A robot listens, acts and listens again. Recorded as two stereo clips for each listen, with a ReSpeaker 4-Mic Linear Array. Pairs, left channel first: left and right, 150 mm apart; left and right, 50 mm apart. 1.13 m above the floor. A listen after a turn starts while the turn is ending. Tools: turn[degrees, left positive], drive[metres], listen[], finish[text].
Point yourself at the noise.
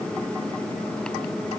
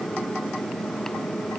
Action: listen[]
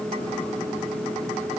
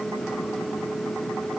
Action: listen[]
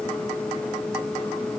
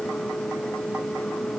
Action: finish[I can't make out anything.]